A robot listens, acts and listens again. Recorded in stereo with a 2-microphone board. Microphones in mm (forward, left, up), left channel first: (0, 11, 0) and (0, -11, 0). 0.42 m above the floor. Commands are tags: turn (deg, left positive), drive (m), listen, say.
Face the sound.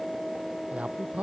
<turn deg="-65"/>
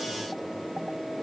<listen/>
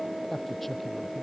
<say>Facing the man speaking.</say>